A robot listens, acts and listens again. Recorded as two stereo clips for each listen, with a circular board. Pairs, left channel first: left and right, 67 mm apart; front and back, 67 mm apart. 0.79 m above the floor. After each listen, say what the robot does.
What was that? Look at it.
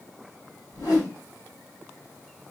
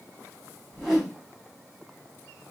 Turn 95° left.
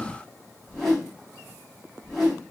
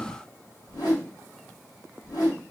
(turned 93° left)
Facing the whoosh, 2 to 4 m away.